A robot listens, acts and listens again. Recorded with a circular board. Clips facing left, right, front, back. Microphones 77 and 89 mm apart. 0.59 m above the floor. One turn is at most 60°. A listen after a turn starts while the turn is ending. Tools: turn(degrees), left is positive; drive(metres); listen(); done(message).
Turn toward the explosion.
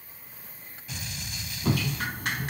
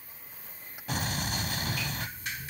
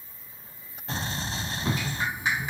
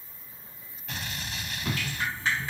turn(degrees=-55)
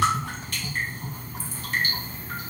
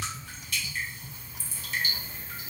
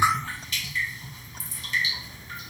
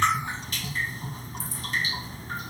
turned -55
done("I heard an explosion from this way, but can't make it out now.")